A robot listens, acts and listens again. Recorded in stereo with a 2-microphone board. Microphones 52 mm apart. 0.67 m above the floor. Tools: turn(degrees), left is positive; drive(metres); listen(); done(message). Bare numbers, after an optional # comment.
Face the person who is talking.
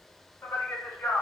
# The man speaking: about 60° left or 120° left.
turn(60)
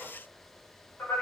# So it is at 45° left.
turn(45)
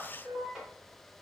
# The man speaking is now 10° right.
turn(-10)
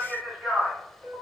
done("Found it: a man speaking, straight ahead.")